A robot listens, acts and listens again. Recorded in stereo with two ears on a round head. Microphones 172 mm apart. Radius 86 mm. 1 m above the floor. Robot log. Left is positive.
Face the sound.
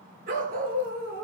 note: The dog barking: about 50° right or 130° right.
cmd yaw -50
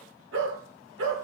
note: So it is at 70° right.
cmd yaw -70
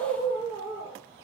note: The dog barking is now 20° right.
cmd yaw -20
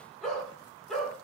end: Found it: a dog barking, straight ahead, over 4 m away.